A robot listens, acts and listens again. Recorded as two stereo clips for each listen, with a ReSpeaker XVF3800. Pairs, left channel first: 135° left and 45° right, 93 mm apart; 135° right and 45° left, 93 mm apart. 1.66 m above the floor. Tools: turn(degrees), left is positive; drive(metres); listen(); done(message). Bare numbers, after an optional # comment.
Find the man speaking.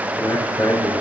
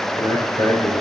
# The man speaking: 170° right.
turn(-170)
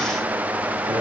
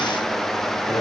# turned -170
# The man speaking is now 40° right.
turn(-40)
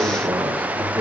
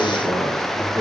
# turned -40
done("Found it: a man speaking, straight ahead, over 4 m away.")